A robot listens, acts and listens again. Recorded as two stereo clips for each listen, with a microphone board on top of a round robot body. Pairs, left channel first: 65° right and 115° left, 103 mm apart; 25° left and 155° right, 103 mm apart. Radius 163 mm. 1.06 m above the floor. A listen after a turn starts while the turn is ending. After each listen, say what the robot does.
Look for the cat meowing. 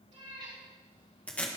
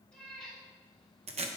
Turn 105° left.
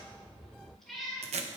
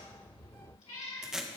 Turn 20° left.
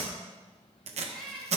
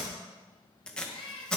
Turn 20° left.
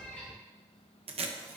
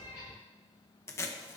Turn 10° left.
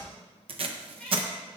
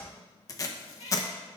Turn 15° left.
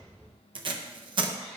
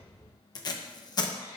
Facing the cat meowing, 2 to 4 m away.